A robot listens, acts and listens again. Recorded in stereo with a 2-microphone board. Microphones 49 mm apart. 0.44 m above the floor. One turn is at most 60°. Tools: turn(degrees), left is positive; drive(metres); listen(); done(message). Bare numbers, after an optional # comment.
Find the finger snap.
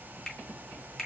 turn(30)
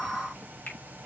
# So it is at 135° left.
turn(60)
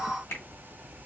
# The finger snap is now 90° left.
turn(60)
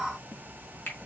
# The finger snap is now 50° left.
turn(50)
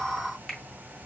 done("Facing the finger snap.")